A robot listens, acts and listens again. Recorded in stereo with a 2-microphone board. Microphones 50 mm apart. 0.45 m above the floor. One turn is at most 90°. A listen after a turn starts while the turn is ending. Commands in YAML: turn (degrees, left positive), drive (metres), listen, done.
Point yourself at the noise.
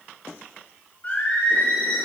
turn: 20
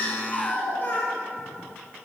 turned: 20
turn: 35
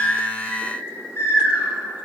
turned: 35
turn: 90
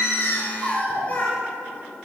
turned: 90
turn: 30
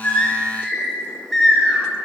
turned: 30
done: "Found it: singing, straight ahead."